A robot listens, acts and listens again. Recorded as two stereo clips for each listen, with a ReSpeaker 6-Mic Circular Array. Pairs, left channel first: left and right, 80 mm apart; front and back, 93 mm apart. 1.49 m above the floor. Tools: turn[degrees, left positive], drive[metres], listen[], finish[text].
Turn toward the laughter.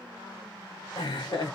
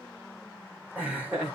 Thought: The laughter: 105° left.
Action: turn[105]
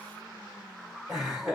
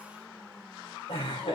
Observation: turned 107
Action: finish[Facing the laughter, 2 to 4 m away.]